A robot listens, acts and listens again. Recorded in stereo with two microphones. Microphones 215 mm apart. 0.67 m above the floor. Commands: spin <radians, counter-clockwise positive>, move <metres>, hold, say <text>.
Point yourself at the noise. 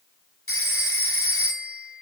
spin 1.57
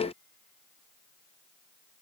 hold
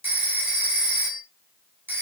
spin -0.17
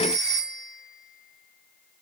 say Found it: a phone ringing, straight ahead.